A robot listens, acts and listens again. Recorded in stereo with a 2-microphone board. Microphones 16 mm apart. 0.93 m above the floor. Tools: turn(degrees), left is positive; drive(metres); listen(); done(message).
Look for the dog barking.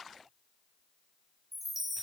listen()
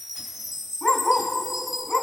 turn(degrees=30)
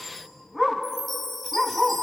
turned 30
turn(degrees=-15)
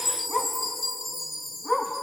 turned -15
done("Found it: a dog barking, straight ahead, 2 to 4 m away.")